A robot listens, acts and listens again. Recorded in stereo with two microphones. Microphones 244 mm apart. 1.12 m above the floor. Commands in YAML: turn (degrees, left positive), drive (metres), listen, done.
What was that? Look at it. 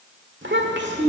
turn: -45
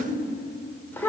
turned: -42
turn: 10
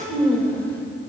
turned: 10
done: "Facing the child speaking."